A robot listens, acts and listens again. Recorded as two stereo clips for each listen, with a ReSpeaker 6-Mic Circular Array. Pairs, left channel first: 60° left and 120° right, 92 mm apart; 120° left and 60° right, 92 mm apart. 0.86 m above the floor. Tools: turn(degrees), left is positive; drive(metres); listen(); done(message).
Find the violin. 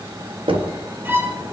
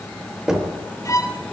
turn(degrees=170)
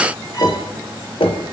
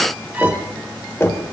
listen()
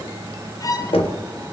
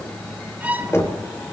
turn(degrees=15)
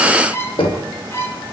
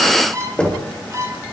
done("Found it: a violin, straight ahead, 1 to 2 m away.")